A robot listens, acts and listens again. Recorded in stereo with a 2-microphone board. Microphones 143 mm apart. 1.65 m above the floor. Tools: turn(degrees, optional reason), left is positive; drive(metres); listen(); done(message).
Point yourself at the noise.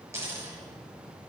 turn(degrees=-20, reason="The dropped coin: about 20° right or 160° right.")
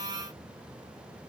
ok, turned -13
listen()
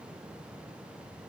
done("I heard a dropped coin, but can't make it out now. It was about 5° right or 150° right.")